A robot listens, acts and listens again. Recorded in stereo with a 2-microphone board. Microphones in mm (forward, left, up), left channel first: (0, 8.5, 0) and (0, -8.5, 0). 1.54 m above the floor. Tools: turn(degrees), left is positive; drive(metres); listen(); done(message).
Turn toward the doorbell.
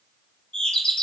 turn(degrees=75)
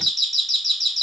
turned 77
turn(degrees=10)
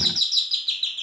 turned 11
done("Found it: a doorbell, straight ahead.")